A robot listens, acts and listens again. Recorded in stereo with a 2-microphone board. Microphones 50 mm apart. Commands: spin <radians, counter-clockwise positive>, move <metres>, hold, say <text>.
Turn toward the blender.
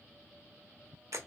hold
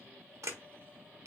hold
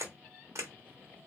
say I can't make out a blender to turn to.